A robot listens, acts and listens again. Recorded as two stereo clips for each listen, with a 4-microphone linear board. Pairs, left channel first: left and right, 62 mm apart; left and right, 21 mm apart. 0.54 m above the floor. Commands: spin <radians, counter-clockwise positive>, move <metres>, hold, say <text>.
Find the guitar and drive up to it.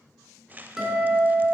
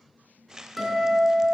spin -0.52
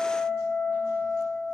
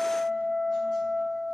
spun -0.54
spin 0.35
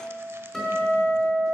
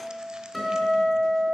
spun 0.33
move 1.0
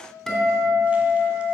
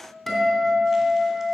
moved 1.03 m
move 1.0
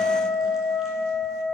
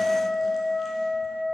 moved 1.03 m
move 1.0
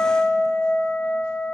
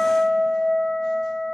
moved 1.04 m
spin 0.26
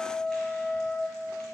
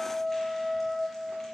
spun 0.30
move 1.0
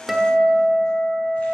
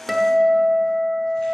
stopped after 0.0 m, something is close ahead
spin -0.17
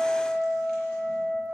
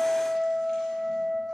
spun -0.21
say I am next to the guitar.